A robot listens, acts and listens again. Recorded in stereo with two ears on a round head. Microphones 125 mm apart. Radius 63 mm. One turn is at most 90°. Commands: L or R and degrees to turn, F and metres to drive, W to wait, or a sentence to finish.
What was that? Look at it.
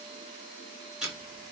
R30
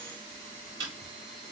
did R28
R90
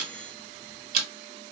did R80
R65
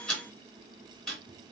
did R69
Found it: ticking, straight ahead, 1 to 2 m away.